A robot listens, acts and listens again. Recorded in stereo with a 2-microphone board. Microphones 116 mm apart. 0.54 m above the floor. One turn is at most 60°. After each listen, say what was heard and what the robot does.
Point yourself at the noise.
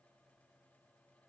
Keep listening.
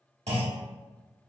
The clunk: about 70° right or 110° right. Turn 60° right.
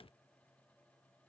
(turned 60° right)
Keep listening.
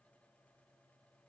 I heard a clunk, but can't make it out now. It was about 10° right or 50° right.